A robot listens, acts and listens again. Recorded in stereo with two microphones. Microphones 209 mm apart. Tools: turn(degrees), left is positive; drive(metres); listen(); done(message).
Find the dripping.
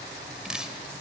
turn(degrees=-30)
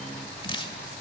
turn(degrees=25)
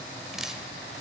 done("Facing the dripping.")